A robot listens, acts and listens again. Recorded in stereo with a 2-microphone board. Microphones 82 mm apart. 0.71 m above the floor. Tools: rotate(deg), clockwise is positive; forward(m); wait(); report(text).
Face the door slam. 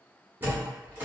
rotate(25)
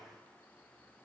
wait()
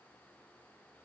report("I heard a door slam, but can't make it out now. It was about straight ahead or 130° right.")